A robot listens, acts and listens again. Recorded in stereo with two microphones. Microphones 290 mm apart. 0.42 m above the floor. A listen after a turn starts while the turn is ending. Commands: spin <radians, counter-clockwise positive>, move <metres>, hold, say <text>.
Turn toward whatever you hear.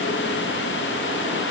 hold
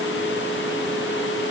hold
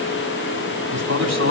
spin -0.79
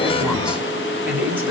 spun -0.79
say Facing the man speaking, 2 to 4 m away.